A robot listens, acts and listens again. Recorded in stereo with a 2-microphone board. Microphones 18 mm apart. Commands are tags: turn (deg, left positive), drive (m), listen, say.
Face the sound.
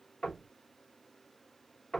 <turn deg="50"/>
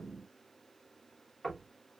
<say>Facing the knocking, 2 to 4 m away.</say>